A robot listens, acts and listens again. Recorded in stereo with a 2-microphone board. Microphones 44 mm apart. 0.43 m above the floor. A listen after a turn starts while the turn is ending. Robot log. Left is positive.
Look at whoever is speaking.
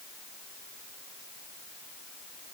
cmd idle
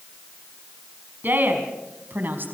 note: The woman speaking: about 50° right or 130° right.
cmd yaw -50
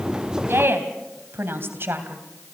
note: So it is at 65° right.
cmd yaw -65
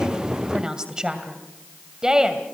note: The woman speaking is now 15° right.
cmd yaw -15
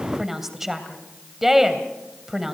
end: Found it: a woman speaking, straight ahead, 2 to 4 m away.